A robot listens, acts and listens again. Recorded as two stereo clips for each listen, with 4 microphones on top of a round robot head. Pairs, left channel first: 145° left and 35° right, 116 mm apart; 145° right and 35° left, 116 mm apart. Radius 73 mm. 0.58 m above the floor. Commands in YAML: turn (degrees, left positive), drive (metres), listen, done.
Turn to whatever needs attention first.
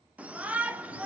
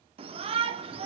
turn: 45
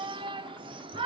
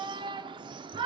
done: "Facing the shout, 1 to 2 m away."